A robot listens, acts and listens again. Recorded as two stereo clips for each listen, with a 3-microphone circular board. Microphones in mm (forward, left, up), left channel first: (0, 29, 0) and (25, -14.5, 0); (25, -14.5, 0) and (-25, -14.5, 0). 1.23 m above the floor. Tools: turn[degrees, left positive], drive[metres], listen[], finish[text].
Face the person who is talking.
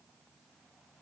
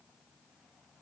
Action: listen[]
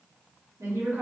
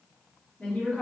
Thought: The woman speaking: 70° right.
Action: turn[-70]
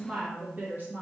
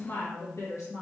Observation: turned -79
Thought: The woman speaking is now 15° right.
Action: turn[-15]
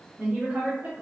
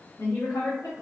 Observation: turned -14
Thought: The woman speaking is now 20° right.
Action: turn[-20]
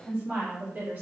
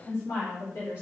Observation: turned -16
Thought: The woman speaking is now 15° right.
Action: turn[-15]
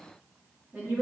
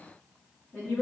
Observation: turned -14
Thought: The woman speaking is now 10° right.
Action: turn[-10]
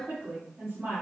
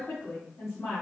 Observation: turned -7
Action: finish[Found it: a woman speaking, straight ahead.]